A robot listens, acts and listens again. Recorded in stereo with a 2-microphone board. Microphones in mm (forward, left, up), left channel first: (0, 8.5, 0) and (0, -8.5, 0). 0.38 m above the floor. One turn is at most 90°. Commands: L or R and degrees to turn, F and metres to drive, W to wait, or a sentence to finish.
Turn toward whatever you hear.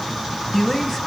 L30
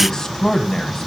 L90
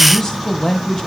L40
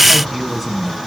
Facing the man speaking, 2 to 4 m away.